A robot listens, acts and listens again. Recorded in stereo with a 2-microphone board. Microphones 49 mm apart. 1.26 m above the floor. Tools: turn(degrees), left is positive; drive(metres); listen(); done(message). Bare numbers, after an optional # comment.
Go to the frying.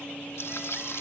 # The frying: about 60° left or 120° left.
turn(60)
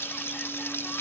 # So it is at 60° left.
turn(60)
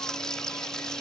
# The frying is now 15° left.
turn(15)
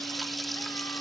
drive(1.0)
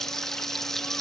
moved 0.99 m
# The frying is now 10° left.
turn(10)
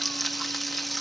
drive(1.0)
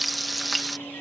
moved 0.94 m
drive(1.0)
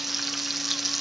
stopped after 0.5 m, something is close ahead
done("I am next to the frying.")